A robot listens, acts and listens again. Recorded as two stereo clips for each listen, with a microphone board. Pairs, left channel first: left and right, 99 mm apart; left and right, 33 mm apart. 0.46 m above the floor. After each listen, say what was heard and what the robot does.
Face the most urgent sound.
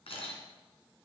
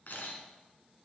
Keep listening.
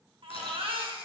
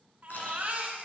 The baby crying: about 65° right or 115° right. Turn 65° right.
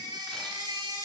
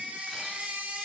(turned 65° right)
So it is at 50° right. Turn 50° right.
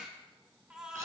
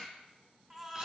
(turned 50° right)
The baby crying is now 10° right. Turn 10° right.
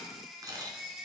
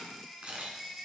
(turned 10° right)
Found it: a baby crying, straight ahead.